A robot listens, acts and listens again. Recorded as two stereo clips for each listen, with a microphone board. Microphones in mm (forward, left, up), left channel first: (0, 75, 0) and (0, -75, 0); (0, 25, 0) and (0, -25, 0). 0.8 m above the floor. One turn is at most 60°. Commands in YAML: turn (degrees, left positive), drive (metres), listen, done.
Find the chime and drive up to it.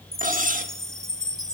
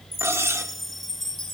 turn: 30
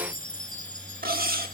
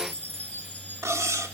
turn: 60
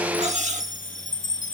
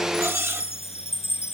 turn: 60
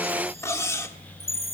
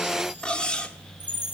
turn: 40
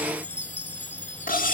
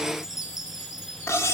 turn: -10
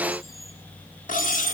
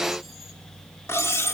drive: 1.0
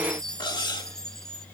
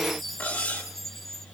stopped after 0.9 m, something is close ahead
done: "Arrived at the chime, straight ahead."